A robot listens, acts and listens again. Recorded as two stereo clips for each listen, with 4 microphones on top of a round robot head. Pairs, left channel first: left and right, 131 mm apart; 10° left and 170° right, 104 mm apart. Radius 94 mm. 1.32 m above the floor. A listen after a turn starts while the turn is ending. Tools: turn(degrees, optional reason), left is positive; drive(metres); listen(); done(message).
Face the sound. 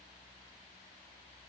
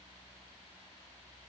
listen()
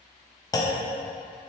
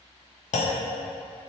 turn(degrees=25, reason="The clunk: 25° left.")
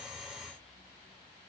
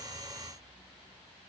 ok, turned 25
done("Facing where the clunk came from. I can't hear it now.")